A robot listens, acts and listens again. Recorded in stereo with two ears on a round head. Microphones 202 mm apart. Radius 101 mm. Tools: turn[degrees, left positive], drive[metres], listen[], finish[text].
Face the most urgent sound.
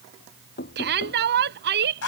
Thought: The shout: about 50° right or 130° right.
Action: turn[-50]
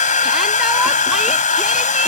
Action: listen[]
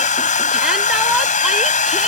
Action: listen[]
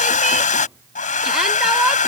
Action: finish[I heard a shout, but can't make it out now. It was about straight ahead or 80° right.]